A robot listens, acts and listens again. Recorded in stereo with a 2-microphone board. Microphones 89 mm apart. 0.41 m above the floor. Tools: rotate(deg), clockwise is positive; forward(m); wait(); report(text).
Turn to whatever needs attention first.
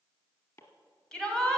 rotate(-30)
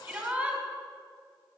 rotate(20)
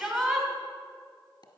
report("Facing the shout.")